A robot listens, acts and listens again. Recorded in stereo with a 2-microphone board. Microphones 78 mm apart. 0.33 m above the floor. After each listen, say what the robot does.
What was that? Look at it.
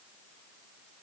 Keep listening.
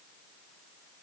Keep listening.
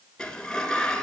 Turn 30° left.
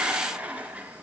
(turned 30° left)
Turn 20° right.
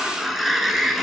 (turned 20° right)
Facing the sliding door.